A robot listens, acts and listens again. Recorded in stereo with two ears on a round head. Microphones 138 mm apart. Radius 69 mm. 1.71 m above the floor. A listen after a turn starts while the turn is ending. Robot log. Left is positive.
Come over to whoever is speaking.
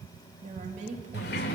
note: The woman speaking: about 50° right or 130° right.
cmd yaw -50
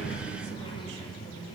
cmd idle
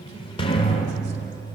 cmd idle
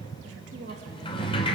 note: So it is at 80° right.
cmd yaw -80
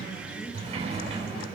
cmd idle
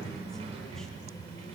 cmd idle
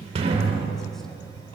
end: I heard a woman speaking from this way, but can't make it out now. I did not reach it.